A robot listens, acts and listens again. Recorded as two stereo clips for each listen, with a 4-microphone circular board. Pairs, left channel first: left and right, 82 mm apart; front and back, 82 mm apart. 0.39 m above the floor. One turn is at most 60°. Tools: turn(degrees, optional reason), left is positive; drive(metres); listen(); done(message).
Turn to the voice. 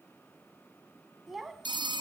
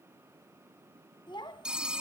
done("Found it: a child speaking, straight ahead, 1 to 2 m away.")